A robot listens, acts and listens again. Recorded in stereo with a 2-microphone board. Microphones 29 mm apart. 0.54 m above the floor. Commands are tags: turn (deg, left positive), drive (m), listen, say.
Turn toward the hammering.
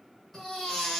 <listen/>
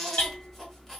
<turn deg="60"/>
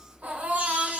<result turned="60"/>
<listen/>
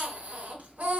<listen/>
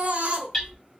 <say>Found it: hammering, straight ahead, 2 to 4 m away.</say>